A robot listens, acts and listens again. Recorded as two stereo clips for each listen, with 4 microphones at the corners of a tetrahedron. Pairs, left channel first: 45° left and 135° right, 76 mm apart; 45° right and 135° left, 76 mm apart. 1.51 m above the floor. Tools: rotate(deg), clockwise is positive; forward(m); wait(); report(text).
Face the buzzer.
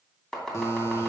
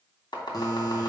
report("Found it: a buzzer, straight ahead.")